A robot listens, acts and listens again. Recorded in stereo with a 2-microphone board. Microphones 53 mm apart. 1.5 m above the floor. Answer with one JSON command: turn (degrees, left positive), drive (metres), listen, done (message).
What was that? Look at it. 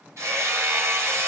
{"turn": -70}
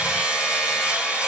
{"turn": -30}
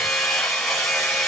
{"done": "Facing the hammering."}